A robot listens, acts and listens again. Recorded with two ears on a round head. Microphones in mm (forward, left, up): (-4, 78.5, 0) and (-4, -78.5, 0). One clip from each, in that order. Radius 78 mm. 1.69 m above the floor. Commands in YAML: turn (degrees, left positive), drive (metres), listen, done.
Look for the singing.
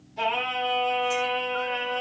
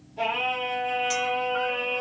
turn: 50
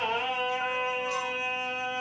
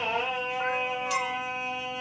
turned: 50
turn: 65
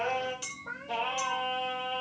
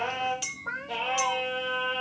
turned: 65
done: "Found it: singing, straight ahead, over 4 m away."